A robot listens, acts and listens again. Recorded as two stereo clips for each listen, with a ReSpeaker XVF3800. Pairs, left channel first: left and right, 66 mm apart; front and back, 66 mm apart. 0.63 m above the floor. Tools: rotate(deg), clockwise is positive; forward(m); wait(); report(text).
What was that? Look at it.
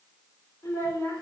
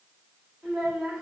rotate(-90)
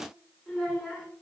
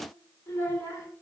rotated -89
report("Facing the child speaking, 1 to 2 m away.")